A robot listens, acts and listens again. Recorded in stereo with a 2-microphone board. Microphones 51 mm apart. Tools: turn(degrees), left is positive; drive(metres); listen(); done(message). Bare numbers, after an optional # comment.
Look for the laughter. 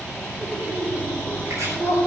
# The laughter: about 65° right or 115° right.
turn(-65)
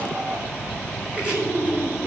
# So it is at 55° right.
turn(-55)
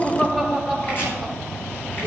done("Found it: laughter, straight ahead, 2 to 4 m away.")